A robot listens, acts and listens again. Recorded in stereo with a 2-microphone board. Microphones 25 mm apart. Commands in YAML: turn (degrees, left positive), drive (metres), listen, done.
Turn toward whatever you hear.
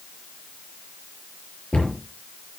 turn: 50
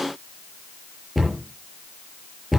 done: "Facing the cupboard door, over 4 m away."